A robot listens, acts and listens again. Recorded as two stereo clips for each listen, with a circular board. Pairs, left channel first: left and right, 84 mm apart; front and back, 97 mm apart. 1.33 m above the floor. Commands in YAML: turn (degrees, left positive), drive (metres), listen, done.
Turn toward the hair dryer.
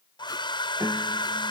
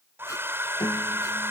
turn: 115
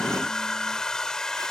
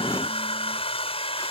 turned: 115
done: "Found it: a hair dryer, straight ahead."